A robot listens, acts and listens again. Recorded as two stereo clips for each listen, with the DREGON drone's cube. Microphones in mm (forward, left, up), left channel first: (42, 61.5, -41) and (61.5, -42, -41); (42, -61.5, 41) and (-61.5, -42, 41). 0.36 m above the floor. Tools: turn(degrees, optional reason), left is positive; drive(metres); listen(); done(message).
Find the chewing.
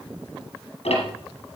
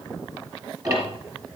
listen()
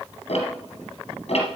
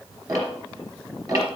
listen()
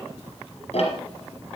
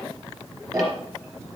done("I can't make out chewing, only ticking.")